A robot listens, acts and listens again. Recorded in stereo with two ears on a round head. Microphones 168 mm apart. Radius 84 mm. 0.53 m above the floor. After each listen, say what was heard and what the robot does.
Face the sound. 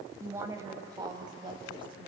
The woman speaking: about 30° right or 150° right. Turn 30° right.
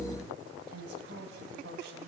So it is at 110° right. Turn 110° right.
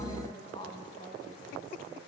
The woman speaking is now 25° left. Turn 25° left.
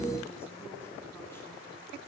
Keep listening.
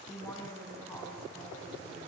The woman speaking is now 15° left. Turn 15° left.
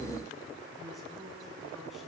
Facing the woman speaking, over 4 m away.